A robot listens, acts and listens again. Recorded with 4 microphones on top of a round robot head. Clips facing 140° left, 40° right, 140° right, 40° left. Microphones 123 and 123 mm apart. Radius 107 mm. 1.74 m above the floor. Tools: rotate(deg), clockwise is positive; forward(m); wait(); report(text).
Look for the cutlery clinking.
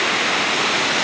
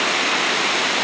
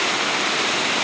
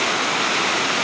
wait()
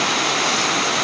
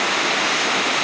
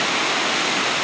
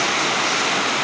wait()
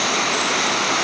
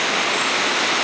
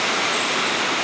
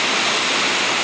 report("I can't make out cutlery clinking to turn to.")